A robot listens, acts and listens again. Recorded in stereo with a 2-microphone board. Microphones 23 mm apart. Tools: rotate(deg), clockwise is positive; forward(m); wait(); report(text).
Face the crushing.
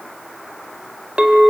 wait()
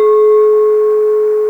wait()
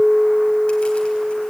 report("I can't make out crushing to turn to.")